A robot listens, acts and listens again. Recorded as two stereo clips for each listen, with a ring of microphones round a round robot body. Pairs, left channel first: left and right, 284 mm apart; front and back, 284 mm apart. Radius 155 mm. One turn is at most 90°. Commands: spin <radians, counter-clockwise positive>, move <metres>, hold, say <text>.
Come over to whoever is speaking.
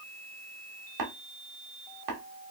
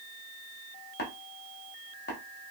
hold
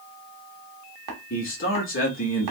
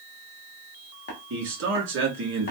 spin 1.57
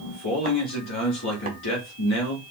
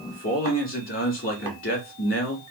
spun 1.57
spin 0.79
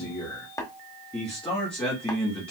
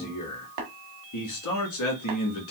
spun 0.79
move 1.0
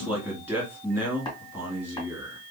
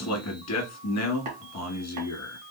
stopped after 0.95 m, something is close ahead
say I am next to the man speaking.